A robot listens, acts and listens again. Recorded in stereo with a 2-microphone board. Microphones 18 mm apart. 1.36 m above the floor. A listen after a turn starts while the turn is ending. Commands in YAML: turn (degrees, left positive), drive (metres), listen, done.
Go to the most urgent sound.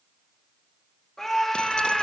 turn: 20
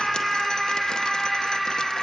drive: 1.0
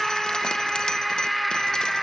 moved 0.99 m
drive: 1.0
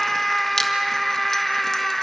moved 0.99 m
turn: 10
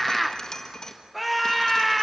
drive: 1.0
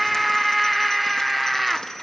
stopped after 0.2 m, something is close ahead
done: "Arrived at the scream, straight ahead."